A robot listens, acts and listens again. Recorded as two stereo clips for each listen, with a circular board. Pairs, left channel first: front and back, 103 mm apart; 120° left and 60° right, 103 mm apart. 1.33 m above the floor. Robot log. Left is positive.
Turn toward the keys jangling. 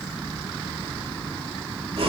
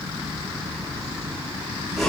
cmd idle
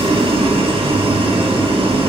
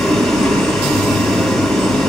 cmd idle
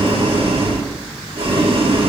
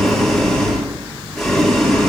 end: I can't make out keys jangling, only boiling.